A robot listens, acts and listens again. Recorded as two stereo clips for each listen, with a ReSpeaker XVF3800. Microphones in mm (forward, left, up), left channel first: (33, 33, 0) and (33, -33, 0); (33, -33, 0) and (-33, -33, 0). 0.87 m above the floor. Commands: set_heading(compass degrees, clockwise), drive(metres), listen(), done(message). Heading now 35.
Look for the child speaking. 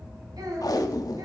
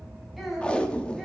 set_heading(125)
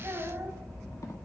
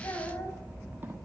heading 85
set_heading(135)
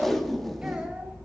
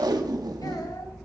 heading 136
listen()
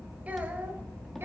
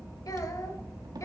set_heading(166)
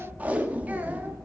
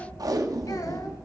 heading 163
listen()
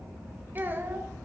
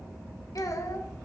set_heading(193)
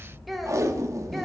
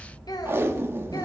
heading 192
done("Found it: a child speaking, straight ahead, 1 to 2 m away.")